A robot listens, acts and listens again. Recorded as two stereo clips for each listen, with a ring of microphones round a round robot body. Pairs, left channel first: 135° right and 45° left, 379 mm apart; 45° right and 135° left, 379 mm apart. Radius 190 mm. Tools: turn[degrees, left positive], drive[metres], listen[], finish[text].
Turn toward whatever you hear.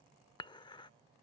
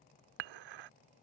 Thought: The dishes clattering: 145° left.
Action: turn[145]
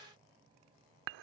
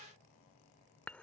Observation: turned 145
Thought: The dishes clattering is now 40° left.
Action: turn[40]
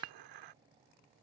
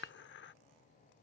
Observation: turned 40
Thought: The dishes clattering is now 15° left.
Action: turn[15]
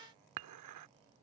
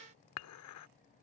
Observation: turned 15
Action: finish[Facing the dishes clattering.]